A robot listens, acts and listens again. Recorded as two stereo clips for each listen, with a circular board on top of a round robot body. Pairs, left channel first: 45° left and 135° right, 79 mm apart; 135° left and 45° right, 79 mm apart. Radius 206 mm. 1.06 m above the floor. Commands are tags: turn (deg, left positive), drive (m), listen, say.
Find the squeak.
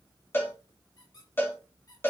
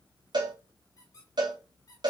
<turn deg="85"/>
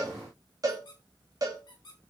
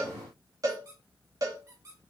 <turn deg="10"/>
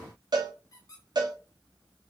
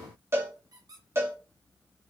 <say>Facing the squeak.</say>